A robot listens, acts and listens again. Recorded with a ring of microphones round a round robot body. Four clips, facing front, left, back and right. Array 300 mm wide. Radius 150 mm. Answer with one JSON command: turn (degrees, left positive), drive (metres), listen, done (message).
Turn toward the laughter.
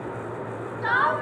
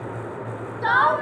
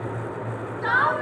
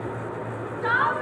{"turn": 90}
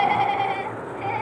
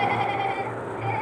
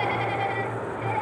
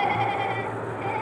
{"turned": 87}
{"done": "Found it: laughter, straight ahead, 2 to 4 m away."}